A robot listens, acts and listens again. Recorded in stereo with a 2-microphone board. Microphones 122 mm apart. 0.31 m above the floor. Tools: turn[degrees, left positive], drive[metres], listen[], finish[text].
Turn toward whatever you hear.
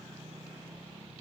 Action: listen[]
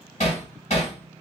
Thought: The hammering: about 65° left or 115° left.
Action: turn[65]
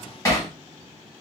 Thought: So it is at 30° left.
Action: turn[30]
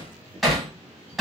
Action: finish[Found it: hammering, straight ahead.]